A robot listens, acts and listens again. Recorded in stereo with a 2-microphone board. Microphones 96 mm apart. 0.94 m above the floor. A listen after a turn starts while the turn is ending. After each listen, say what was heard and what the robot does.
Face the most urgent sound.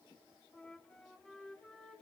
Keep listening.
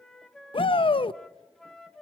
The shout: about 60° left or 120° left. Turn 60° left.
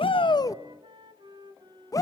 So it is at 40° left. Turn 40° left.
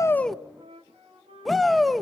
Found it: a shout, straight ahead.